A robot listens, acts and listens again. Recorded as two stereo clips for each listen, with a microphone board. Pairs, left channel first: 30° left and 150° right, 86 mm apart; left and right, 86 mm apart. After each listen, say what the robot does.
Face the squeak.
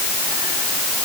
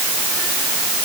Keep listening.
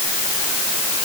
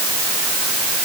Keep listening.
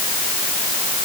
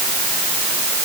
I can't make out a squeak to turn to.